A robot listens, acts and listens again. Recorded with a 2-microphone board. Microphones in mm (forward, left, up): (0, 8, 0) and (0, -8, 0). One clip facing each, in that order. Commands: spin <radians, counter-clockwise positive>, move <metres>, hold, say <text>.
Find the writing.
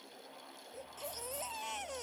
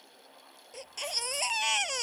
hold
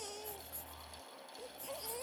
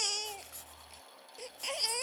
hold
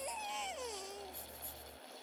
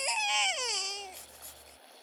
say I can't make out writing to turn to.